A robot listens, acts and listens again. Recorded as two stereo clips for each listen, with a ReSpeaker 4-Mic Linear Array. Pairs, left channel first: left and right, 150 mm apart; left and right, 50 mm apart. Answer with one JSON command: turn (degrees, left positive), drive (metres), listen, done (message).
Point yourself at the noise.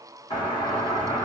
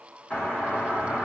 {"turn": 30}
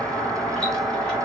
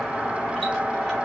{"turn": 10}
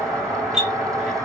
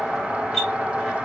{"done": "Facing the doorbell."}